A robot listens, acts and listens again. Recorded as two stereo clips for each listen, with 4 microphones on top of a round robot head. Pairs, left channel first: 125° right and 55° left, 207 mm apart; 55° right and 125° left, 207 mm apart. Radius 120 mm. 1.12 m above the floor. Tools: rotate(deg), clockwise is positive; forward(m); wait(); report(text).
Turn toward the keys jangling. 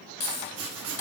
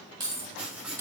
rotate(160)
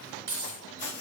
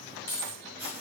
rotate(-20)
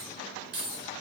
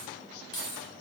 rotate(-15)
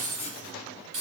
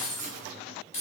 report("Found it: keys jangling, straight ahead, over 4 m away.")